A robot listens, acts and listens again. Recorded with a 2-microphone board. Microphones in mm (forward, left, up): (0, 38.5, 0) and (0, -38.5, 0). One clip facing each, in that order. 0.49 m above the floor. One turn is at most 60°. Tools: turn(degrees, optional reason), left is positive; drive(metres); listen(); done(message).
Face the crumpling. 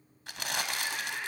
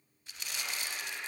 turn(degrees=60, reason="The crumpling: about 65° left or 115° left.")
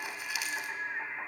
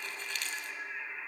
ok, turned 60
turn(degrees=10, reason="So it is at 10° left.")
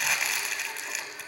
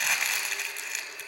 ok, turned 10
done("Facing the crumpling, 2 to 4 m away.")